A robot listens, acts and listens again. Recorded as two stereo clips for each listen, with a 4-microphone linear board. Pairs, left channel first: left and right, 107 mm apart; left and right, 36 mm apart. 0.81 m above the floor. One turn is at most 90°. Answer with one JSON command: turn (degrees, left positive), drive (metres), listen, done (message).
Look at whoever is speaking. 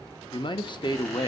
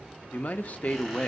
{"turn": 50}
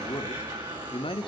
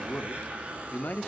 {"turn": 70}
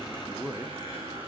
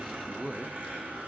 {"turn": -10}
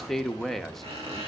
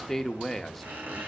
{"done": "Facing the man speaking."}